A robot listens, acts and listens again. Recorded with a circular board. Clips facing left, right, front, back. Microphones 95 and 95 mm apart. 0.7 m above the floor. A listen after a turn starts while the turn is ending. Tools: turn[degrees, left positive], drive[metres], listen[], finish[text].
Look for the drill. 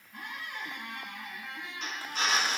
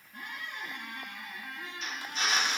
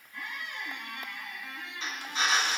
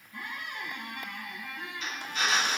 Thought: The drill: 65° left.
Action: turn[65]
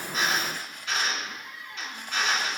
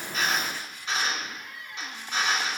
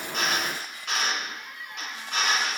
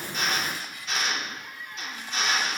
Thought: The drill is now 15° right.
Action: turn[-15]
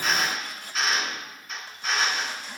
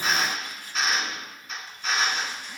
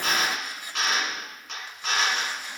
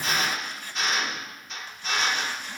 Action: finish[Found it: a drill, straight ahead.]